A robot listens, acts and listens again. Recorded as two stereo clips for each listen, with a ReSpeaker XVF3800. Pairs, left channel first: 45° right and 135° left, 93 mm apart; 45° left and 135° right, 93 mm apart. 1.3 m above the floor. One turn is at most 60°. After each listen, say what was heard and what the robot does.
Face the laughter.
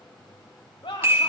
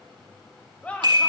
The laughter: 30° right. Turn 30° right.
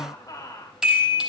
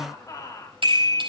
Found it: laughter, straight ahead, 2 to 4 m away.